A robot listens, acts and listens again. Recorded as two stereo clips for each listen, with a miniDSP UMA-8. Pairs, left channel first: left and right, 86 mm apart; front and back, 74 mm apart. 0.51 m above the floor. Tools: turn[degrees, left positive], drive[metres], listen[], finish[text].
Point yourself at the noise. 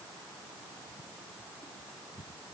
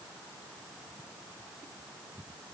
Action: listen[]
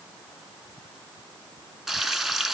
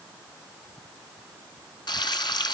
Action: finish[Facing the frying, 1 to 2 m away.]